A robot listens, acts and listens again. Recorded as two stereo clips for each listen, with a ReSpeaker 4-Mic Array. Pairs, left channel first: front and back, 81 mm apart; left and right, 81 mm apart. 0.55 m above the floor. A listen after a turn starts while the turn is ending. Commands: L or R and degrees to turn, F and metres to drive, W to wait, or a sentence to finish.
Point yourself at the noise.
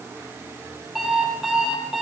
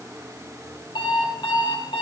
L95
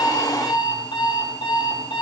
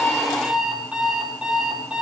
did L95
R10
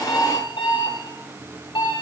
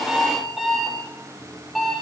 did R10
Facing the alarm clock, over 4 m away.